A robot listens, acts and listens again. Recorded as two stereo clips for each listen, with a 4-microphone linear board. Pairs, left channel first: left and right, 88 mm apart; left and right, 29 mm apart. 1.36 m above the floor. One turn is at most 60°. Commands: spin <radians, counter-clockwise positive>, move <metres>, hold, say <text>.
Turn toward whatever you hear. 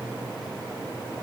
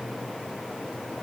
hold
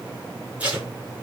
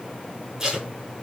spin -0.52
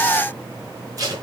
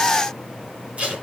spin -1.05
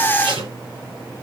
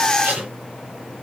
spin -1.05
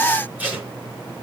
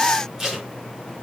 spin -0.26
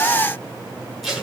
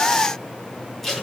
say Facing the tape being pulled.